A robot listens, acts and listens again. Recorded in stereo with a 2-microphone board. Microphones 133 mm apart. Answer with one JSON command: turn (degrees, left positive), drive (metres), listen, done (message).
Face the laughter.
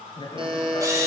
{"turn": 40}
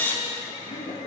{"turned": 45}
{"turn": 100}
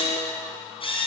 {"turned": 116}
{"turn": -15}
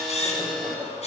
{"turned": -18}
{"listen": true}
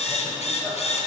{"done": "I heard laughter from this way, but can't make it out now."}